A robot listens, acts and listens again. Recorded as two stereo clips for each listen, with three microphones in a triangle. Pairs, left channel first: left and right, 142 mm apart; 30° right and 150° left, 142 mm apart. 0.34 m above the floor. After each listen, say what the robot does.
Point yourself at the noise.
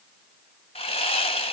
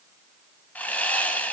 Turn 50° left.
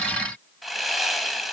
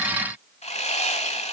Found it: sawing, straight ahead.